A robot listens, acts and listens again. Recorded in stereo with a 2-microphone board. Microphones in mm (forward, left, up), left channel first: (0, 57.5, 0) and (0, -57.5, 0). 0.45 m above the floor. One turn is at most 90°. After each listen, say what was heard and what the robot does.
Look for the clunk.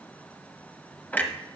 The clunk: about 15° left or 165° left. Turn 15° left.
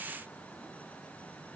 Keep listening.
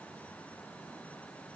I heard a clunk, but can't make it out now. It was about straight ahead or 150° left.